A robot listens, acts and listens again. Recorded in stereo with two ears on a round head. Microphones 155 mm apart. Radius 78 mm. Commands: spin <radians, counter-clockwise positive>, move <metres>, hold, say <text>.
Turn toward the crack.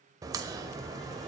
spin -0.35
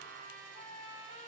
hold
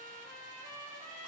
say I heard a crack, but can't make it out now. It was about straight ahead or 140° right.